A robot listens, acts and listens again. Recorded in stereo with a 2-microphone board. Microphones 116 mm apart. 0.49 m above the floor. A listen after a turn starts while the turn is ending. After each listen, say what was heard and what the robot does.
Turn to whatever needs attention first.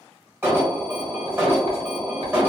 The alarm: about 15° right or 165° right. Turn 15° right.
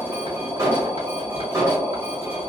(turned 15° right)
So it is at 150° right. Turn 150° right.
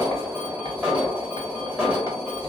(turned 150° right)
The alarm is now 10° right. Turn 10° right.
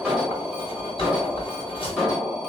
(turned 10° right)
Facing the alarm.